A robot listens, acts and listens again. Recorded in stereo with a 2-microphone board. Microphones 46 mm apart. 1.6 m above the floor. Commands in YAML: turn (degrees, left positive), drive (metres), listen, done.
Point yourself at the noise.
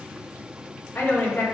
turn: 65
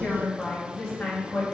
turn: 20
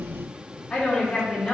turn: 10
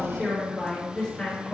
done: "Found it: a woman speaking, straight ahead, over 4 m away."